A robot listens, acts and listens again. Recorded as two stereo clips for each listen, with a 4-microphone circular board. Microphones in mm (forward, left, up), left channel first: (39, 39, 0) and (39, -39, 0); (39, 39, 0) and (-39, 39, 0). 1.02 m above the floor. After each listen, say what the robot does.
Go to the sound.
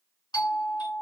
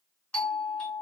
Turn 75° left.
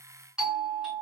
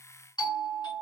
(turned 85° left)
Turn 10° right.
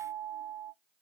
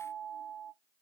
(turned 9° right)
Drive 1.0 m forward.
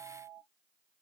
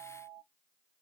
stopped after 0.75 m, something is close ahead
Turn 10° right.
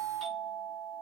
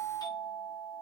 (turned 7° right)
I am next to the doorbell.